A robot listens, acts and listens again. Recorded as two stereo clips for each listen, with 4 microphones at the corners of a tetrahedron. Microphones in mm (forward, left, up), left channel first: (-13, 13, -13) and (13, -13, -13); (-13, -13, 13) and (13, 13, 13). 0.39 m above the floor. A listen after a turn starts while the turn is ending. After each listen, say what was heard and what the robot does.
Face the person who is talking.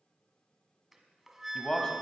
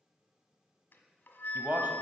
The man speaking: 70° left. Turn 70° left.
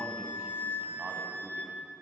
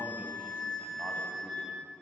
Keep listening.
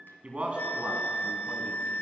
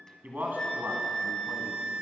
The man speaking is now 15° left. Turn 15° left.
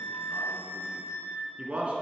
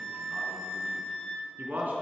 The man speaking is now 10° left. Turn 10° left.
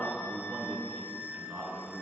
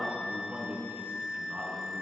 Found it: a man speaking, straight ahead.